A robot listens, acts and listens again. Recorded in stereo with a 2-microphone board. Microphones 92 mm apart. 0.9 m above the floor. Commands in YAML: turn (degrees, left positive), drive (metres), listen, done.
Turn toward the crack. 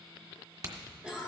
turn: -45
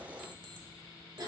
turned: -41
listen: true
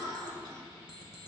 done: "I heard a crack, but can't make it out now. It was about straight ahead or 95° right."